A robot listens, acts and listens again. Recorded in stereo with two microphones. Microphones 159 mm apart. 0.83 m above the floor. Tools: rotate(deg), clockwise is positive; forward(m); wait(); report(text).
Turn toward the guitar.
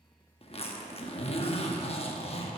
wait()
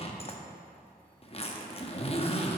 wait()
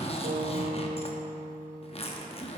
rotate(60)
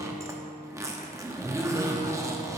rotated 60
rotate(35)
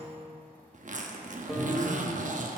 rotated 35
report("Found it: a guitar, straight ahead.")